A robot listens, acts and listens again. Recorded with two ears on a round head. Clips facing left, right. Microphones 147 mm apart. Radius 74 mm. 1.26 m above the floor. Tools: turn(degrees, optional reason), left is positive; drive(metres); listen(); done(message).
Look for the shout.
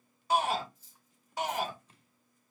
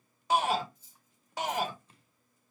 turn(degrees=-55, reason="The shout: about 55° right or 125° right.")
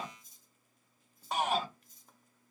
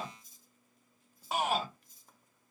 done("Facing the shout, 1 to 2 m away.")